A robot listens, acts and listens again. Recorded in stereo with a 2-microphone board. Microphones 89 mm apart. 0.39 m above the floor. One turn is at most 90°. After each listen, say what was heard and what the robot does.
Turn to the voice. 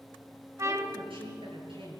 Turn 90° right.
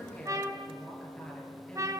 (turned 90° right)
So it is at 10° left. Turn 10° left.
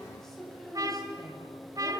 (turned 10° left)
Found it: a woman speaking, straight ahead.